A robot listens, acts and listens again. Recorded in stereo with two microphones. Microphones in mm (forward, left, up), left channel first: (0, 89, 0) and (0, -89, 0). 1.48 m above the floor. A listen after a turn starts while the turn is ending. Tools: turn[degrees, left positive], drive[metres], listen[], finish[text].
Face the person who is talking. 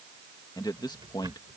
Thought: The man speaking: about 25° left or 155° left.
Action: turn[25]
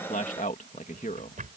Thought: So it is at 130° left.
Action: turn[130]
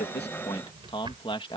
Thought: The man speaking is now 30° left.
Action: turn[30]
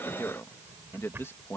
Thought: The man speaking is now 15° left.
Action: turn[15]
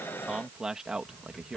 Action: finish[Facing the man speaking.]